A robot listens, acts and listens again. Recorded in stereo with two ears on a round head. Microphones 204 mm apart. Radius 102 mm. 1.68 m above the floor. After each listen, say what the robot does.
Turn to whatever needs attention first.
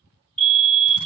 Turn 25° right.
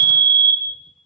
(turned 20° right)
Turn 135° right.
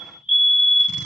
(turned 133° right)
Found it: a fire alarm, straight ahead.